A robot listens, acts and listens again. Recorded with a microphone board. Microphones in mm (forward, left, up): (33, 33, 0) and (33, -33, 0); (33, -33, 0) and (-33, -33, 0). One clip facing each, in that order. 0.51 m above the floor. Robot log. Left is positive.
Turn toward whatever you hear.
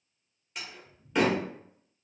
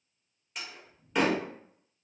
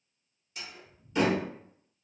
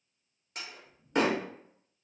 note: The door slam: straight behind.
cmd yaw +180
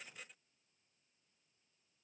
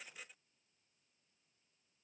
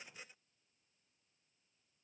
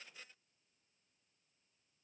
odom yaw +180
end: I heard a door slam from this way, but can't make it out now.